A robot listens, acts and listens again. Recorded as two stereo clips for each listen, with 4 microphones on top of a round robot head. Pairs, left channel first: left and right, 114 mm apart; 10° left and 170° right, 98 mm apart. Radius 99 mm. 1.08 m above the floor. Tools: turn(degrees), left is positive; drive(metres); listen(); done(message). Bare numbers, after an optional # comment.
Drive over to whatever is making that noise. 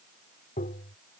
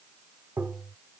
# The tapping: 120° left.
turn(120)
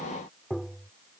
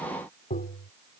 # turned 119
drive(1.0)
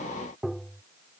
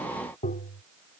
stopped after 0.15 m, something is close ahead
done("Blocked. The tapping is further on, straight ahead.")